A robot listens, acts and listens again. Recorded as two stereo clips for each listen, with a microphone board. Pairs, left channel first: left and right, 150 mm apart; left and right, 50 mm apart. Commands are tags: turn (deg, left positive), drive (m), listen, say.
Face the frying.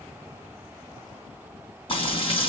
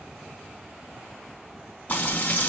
<turn deg="40"/>
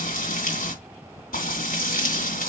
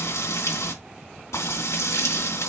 <turn deg="100"/>
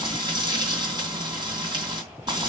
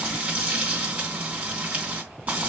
<turn deg="-30"/>
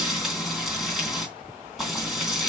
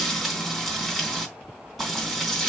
<say>Facing the frying, 2 to 4 m away.</say>